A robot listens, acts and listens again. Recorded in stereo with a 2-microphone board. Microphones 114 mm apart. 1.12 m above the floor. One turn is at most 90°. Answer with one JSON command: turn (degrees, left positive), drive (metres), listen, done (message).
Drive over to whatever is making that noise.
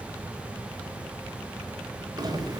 {"turn": -35}
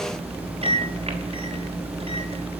{"turn": -90}
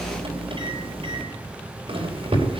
{"turn": -60}
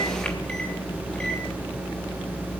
{"turn": 10}
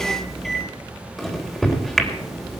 {"drive": 1.0}
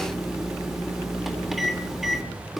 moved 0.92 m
{"drive": 1.0}
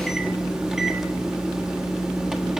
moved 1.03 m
{"drive": 1.0}
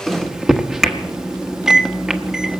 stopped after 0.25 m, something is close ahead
{"done": "I am next to the microwave."}